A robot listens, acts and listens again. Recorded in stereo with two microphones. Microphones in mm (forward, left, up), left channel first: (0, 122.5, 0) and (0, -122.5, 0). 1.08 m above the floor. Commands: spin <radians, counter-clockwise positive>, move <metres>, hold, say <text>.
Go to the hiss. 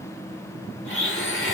hold
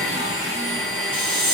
spin -1.57
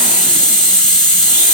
move 1.0
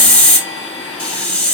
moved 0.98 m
move 1.0
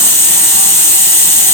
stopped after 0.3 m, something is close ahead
spin 0.26
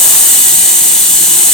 say I am next to the hiss.